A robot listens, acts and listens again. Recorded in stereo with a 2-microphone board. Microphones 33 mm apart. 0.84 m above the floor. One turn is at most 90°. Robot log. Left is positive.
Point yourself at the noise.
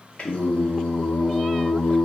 note: The singing: about 35° left or 145° left.
cmd yaw +35
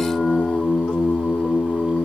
note: So it is at 105° left.
cmd yaw +90
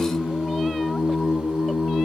end: Found it: singing, straight ahead, 2 to 4 m away.